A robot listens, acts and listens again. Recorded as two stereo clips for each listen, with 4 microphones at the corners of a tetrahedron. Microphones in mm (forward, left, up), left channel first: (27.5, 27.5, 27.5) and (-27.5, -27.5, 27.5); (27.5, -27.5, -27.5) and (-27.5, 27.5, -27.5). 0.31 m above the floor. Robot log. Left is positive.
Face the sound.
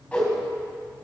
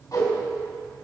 note: The whoosh: 25° right.
cmd yaw -25
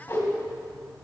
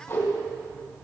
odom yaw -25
end: Found it: a whoosh, straight ahead.